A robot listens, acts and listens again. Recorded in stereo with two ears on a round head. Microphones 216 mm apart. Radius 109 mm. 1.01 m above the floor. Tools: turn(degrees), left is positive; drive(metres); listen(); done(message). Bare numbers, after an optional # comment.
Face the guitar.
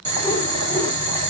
listen()
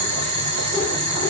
listen()
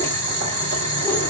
done("I can't make out a guitar, only boiling.")